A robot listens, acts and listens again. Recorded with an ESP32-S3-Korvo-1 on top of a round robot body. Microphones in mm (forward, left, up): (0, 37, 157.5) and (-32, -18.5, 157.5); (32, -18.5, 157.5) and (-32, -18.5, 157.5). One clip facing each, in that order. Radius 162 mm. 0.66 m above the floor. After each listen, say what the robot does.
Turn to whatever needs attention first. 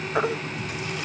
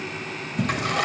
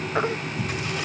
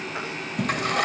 Turn 60° left.
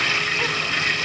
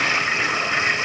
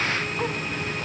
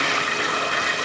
Keep listening.
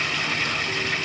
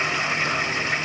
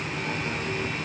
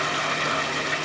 Keep listening.
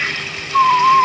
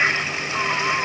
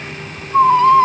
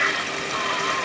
Turn 20° left.
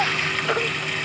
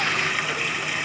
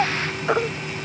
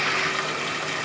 Found it: a baby crying, straight ahead.